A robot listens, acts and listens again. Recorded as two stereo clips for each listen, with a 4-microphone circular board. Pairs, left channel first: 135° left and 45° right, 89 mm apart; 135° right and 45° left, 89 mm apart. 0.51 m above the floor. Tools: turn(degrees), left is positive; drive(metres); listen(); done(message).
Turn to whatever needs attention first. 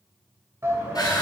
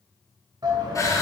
turn(degrees=10)
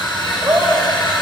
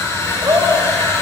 done("Facing the shout.")